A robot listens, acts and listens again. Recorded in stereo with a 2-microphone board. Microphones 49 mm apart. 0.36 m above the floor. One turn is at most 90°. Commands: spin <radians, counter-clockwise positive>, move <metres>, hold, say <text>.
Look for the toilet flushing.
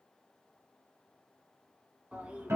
spin -0.44
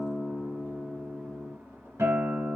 spin -1.57
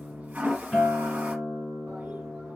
spin -0.70
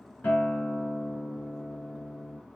spin -0.17
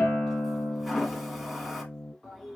say Found it: a toilet flushing, straight ahead, under 1 m away.